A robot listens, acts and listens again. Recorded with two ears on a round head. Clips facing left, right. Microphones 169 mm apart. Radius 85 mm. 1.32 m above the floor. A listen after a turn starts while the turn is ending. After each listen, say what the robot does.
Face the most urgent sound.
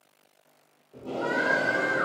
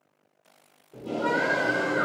Turn 65° left.
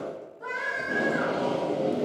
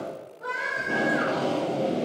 Facing the scream, 1 to 2 m away.